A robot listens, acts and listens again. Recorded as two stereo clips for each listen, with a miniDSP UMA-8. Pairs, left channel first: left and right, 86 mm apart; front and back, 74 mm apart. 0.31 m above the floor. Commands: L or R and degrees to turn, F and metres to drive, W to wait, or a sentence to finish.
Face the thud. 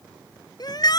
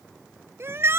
W
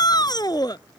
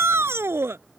W
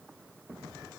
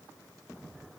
I can't make out a thud to turn to.